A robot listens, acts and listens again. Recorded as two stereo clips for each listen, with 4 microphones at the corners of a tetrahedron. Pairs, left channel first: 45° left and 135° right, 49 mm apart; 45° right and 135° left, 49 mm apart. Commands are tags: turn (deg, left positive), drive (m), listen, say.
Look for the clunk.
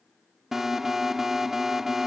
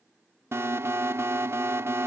<listen/>
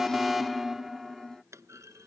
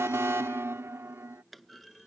<turn deg="-135"/>
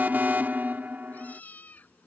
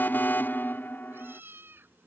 <say>Facing where the clunk came from. I can't hear it now.</say>